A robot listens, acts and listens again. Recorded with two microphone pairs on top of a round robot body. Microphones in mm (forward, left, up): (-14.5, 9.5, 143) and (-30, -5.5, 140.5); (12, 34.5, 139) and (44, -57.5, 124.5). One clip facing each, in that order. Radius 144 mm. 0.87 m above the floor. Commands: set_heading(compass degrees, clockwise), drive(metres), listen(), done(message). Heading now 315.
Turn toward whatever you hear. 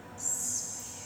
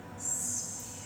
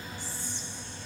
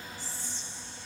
set_heading(235)
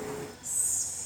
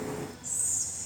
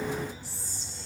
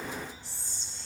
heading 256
set_heading(236)
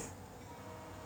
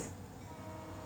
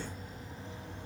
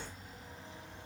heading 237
listen()
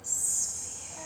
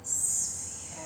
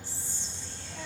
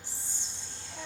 done("Found it: whispering, straight ahead, 2 to 4 m away.")